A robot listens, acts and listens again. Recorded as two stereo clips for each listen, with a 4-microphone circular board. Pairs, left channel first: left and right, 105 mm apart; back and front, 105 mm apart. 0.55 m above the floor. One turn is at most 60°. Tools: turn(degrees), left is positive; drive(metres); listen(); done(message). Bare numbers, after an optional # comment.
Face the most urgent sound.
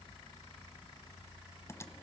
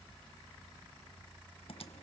listen()
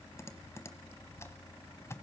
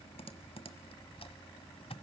listen()
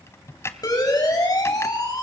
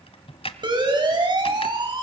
# The siren: 40° left.
turn(40)
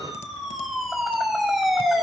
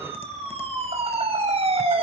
done("Facing the siren.")